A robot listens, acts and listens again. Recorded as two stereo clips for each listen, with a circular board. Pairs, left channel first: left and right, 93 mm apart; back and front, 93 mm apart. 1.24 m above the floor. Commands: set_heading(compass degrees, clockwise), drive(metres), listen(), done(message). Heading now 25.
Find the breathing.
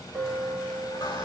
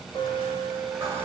listen()
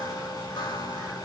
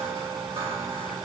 listen()
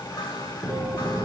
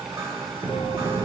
set_heading(250)
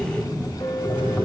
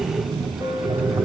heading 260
set_heading(250)
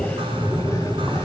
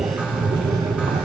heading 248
done("Facing the breathing.")